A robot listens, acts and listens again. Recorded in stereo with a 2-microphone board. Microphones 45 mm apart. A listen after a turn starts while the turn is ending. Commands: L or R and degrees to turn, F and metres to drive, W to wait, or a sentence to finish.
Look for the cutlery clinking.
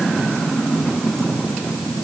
W
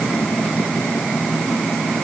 W
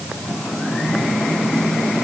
I can't make out cutlery clinking.